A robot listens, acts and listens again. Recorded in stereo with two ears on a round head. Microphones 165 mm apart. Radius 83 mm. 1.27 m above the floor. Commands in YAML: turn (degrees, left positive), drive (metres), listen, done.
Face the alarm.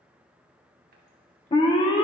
turn: 25
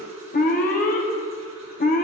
turn: 125
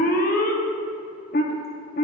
turn: 50
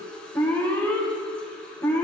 turn: 10
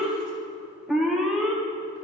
done: "Facing the alarm."